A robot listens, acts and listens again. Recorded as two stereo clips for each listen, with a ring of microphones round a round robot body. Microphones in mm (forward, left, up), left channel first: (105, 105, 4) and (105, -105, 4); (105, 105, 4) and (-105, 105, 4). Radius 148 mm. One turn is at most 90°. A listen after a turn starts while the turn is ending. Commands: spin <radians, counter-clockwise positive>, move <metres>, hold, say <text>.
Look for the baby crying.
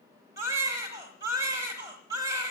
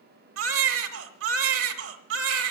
spin -1.57
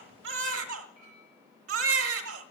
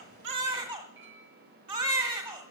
spin -1.57
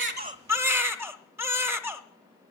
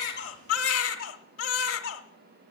spin -0.17
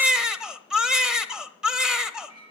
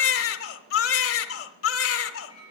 say Facing the baby crying, 1 to 2 m away.